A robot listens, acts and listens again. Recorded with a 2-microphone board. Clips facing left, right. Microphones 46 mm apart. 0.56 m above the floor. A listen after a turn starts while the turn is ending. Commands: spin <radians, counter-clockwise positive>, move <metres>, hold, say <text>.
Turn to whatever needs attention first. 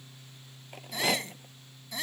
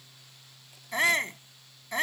spin -0.79
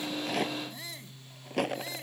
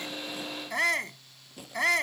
spin -1.57
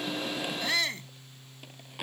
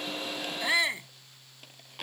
spin -0.35
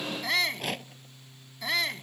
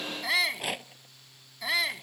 say Facing the shout.